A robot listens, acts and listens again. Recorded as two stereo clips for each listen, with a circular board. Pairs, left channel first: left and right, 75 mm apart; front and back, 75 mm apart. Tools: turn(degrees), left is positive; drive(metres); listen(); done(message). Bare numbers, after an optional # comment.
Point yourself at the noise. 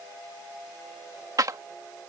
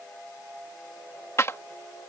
# The clap: 50° right.
turn(-50)
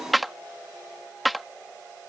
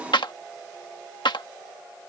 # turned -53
done("Found it: a clap, straight ahead.")